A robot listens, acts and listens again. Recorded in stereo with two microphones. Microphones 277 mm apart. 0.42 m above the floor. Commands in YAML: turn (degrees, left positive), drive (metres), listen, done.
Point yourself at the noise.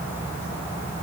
listen: true
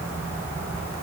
listen: true
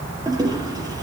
turn: -30
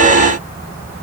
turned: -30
listen: true
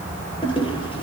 turn: 15
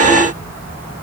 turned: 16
listen: true
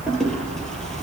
done: "Found it: a toilet flushing, straight ahead, over 4 m away."